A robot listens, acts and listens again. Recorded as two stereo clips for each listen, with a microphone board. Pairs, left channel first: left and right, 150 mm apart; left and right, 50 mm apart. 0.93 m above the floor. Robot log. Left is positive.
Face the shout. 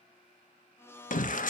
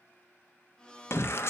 note: The shout: about 60° left or 120° left.
cmd yaw +60
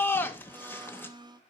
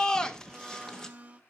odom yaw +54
note: So it is at 15° left.
cmd yaw +15
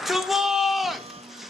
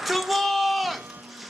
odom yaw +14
end: Facing the shout.